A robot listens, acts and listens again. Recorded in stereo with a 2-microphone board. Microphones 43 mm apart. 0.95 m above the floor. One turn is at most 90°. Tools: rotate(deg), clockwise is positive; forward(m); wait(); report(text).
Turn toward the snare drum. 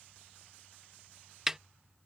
rotate(30)
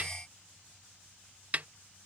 rotate(90)
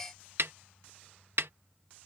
rotate(85)
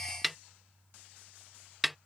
report("Facing the snare drum.")